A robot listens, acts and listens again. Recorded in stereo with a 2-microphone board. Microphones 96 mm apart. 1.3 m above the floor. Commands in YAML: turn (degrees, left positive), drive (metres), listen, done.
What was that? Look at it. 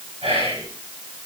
turn: -90
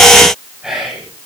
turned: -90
turn: -10
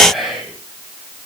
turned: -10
done: "Facing the whispering."